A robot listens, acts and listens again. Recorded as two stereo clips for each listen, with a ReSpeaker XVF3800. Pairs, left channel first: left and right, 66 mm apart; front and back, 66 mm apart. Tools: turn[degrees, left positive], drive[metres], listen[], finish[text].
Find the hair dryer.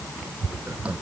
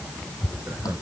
Action: listen[]
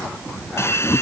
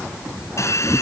Thought: The hair dryer: 40° left.
Action: turn[40]
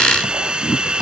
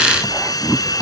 Thought: The hair dryer is now 15° right.
Action: turn[-15]
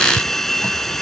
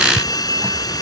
Action: finish[Found it: a hair dryer, straight ahead.]